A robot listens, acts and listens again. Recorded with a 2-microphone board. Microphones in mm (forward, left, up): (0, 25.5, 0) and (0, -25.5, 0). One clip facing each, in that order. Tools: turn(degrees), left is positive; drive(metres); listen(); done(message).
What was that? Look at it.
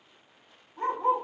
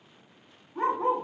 turn(degrees=-70)
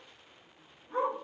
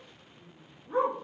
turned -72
turn(degrees=-25)
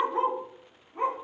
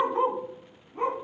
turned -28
turn(degrees=10)
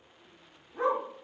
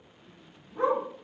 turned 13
done("Facing the dog barking, 2 to 4 m away.")